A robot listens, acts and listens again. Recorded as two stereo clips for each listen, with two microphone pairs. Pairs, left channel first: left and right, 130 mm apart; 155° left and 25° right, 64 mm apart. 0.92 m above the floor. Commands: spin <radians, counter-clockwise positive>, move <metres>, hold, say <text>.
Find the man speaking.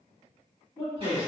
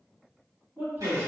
spin 0.52
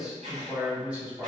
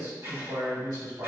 spin -0.26
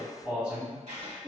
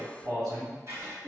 spin -0.26
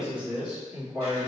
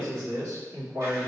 spin -0.26
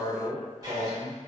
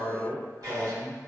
say Found it: a man speaking, straight ahead.